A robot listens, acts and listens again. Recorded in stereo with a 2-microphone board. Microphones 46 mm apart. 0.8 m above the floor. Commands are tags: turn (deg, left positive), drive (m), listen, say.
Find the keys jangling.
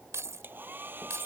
<turn deg="-90"/>
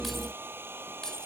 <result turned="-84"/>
<turn deg="15"/>
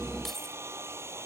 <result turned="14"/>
<listen/>
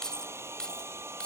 <turn deg="20"/>
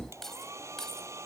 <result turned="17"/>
<turn deg="10"/>
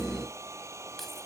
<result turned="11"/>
<listen/>
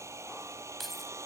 <say>Facing the keys jangling.</say>